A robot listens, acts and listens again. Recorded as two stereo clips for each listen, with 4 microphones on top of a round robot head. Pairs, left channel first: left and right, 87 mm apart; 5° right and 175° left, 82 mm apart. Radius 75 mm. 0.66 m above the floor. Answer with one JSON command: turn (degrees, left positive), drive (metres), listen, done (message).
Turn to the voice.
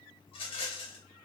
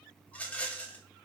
{"listen": true}
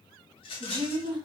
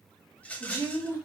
{"turn": -65}
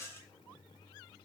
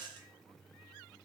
{"listen": true}
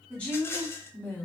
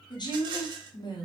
{"turn": 15}
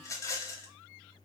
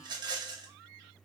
{"listen": true}
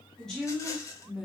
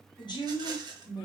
{"turn": 10}
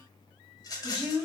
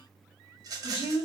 {"done": "Facing the woman speaking."}